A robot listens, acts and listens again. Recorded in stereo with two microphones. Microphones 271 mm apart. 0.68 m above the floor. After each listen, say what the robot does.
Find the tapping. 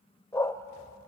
Keep listening.
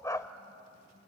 Keep listening.
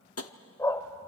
Turn 60° left.
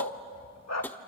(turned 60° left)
Found it: tapping, straight ahead.